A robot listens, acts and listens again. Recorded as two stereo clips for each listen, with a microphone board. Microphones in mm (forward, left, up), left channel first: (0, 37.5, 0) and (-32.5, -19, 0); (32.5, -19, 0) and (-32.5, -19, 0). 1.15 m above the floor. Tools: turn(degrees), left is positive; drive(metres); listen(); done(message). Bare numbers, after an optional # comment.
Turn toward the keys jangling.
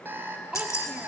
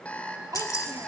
# The keys jangling: 25° left.
turn(25)
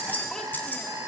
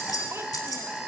done("Facing the keys jangling.")